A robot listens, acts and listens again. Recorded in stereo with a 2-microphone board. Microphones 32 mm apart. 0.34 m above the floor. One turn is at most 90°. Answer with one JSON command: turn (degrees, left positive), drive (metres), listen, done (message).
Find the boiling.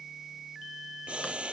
{"turn": -35}
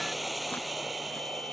{"done": "Facing the boiling."}